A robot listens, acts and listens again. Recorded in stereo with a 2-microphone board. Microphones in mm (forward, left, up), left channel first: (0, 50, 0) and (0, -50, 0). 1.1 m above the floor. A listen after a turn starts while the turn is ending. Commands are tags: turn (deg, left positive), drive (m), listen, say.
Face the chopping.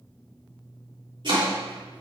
<turn deg="-50"/>
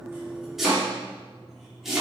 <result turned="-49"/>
<say>Found it: chopping, straight ahead.</say>